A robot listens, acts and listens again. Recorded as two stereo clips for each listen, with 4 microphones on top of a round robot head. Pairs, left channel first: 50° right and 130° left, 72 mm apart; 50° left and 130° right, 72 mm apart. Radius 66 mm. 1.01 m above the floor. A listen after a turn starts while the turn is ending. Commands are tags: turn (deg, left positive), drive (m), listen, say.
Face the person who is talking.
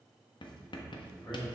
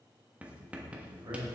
<turn deg="-95"/>
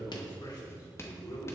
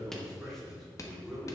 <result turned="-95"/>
<turn deg="-30"/>
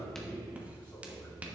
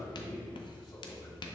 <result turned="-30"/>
<turn deg="20"/>
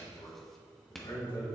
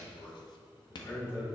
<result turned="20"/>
<say>Found it: a man speaking, straight ahead, over 4 m away.</say>